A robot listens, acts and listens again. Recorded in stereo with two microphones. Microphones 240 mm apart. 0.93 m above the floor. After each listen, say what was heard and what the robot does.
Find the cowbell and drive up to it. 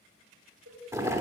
Turn 90° right.
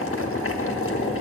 Keep listening.
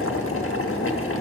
Keep listening.
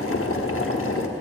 Facing where the cowbell came from. I can't hear it now. I did not reach it.